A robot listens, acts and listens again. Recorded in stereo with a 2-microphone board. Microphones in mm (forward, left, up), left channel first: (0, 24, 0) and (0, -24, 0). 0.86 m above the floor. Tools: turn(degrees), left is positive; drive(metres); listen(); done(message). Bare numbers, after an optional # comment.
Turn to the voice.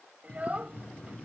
# The child speaking: about 30° right or 150° right.
turn(-30)
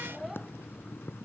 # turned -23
listen()
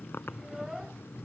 listen()
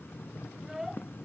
done("Facing the child speaking.")